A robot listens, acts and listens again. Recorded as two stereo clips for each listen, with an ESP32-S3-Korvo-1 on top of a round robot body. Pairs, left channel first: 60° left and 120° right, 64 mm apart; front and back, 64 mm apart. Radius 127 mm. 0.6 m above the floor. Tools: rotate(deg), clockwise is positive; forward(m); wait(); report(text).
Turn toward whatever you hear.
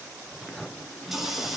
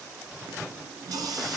rotate(-155)
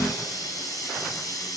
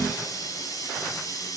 rotate(-30)
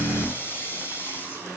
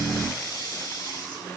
report("Found it: a running tap, straight ahead, over 4 m away.")